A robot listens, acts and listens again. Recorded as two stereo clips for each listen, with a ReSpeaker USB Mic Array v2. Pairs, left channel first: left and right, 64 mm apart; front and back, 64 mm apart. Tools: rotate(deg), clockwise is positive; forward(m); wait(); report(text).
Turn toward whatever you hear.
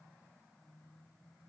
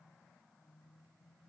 wait()
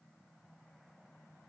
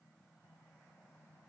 wait()
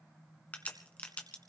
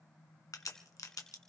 rotate(-25)
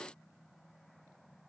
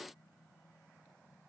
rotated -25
report("I heard a crack from this way, but can't make it out now.")